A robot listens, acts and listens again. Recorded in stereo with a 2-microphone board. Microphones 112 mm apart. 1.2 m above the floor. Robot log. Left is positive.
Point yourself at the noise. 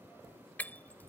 cmd yaw +30
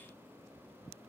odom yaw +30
cmd idle
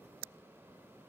end: I heard breaking glass, but can't make it out now. It was about 15° right or 135° left.